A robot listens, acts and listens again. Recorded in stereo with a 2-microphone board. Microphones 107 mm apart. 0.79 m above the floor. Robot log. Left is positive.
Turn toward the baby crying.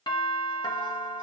cmd idle
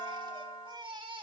note: The baby crying: about 45° right or 135° right.
cmd yaw -45
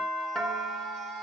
cmd idle
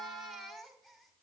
end: Facing the baby crying, 1 to 2 m away.